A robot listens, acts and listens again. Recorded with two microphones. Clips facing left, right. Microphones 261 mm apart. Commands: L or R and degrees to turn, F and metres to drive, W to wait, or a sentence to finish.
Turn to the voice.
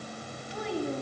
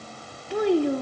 R70
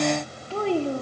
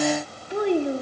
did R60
R15
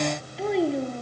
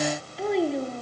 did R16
Found it: a child speaking, straight ahead.